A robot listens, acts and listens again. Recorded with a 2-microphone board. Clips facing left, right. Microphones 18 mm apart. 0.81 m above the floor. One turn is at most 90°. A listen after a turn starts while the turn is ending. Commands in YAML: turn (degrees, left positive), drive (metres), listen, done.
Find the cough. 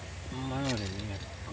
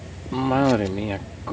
turn: -55
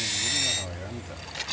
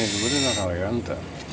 turn: -45
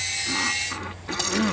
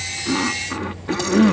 done: "Facing the cough."